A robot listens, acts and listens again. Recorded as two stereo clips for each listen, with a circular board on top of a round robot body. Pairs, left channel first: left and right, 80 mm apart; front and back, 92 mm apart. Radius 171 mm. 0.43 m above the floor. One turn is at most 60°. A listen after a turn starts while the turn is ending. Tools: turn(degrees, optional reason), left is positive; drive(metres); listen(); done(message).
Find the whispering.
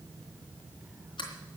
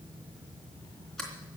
listen()
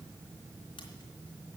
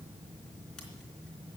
listen()
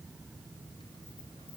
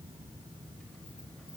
done("I can't make out whispering to turn to.")